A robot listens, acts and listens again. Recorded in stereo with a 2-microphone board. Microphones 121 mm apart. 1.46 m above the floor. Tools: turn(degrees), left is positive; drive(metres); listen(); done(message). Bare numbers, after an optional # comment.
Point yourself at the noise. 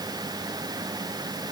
listen()
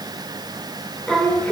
turn(30)
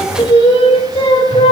# So it is at 120° left.
turn(120)
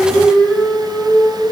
done("Facing the singing, 2 to 4 m away.")